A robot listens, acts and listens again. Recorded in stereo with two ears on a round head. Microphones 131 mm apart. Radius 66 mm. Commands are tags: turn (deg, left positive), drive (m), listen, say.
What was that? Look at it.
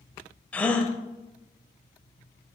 <turn deg="30"/>
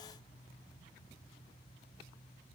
<listen/>
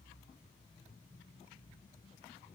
<say>I heard a gasp, but can't make it out now. It was about 20° right or 140° left.</say>